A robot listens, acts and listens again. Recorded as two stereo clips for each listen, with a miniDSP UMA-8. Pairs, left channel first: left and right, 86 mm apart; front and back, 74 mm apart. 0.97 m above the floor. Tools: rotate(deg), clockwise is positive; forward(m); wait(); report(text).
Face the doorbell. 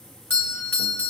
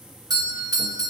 rotate(-155)
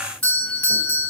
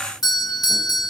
rotate(-15)
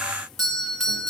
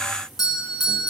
report("Facing the doorbell.")